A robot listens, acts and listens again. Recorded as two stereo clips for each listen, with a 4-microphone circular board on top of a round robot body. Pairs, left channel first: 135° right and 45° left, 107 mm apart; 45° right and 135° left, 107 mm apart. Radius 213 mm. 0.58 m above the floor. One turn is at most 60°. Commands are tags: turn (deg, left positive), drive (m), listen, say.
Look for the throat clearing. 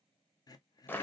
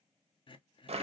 <turn deg="-60"/>
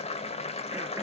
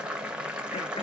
<turn deg="-25"/>
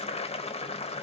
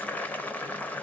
<listen/>
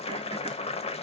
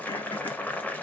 <say>I heard throat clearing from this way, but can't make it out now.</say>